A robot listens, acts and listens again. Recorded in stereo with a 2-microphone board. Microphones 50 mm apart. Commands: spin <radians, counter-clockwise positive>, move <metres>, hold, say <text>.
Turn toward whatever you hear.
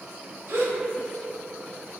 spin -1.22
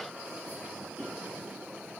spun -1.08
hold
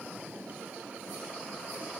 say I heard a gasp, but can't make it out now. It was about 5° right or 50° right.